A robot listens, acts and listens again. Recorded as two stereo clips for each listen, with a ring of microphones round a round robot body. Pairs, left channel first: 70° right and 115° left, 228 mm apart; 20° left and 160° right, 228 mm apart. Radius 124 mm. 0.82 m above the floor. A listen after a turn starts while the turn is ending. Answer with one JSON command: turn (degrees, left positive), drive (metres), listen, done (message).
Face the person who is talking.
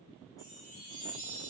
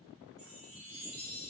{"listen": true}
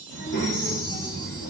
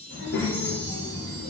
{"turn": -20}
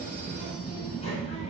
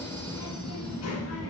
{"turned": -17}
{"done": "Facing the child speaking, under 1 m away."}